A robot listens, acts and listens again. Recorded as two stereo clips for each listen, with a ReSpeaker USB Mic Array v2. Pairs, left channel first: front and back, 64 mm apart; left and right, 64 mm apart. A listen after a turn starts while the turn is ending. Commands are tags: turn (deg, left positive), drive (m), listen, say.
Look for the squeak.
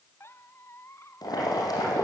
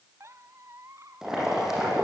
<turn deg="-50"/>
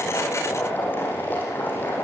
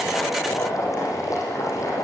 <listen/>
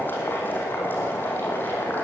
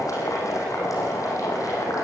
<listen/>
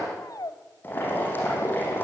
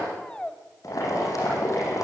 <turn deg="15"/>
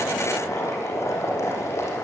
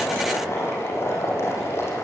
<listen/>
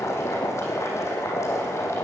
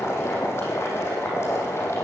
<listen/>
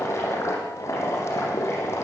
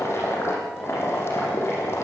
<say>I heard a squeak from this way, but can't make it out now.</say>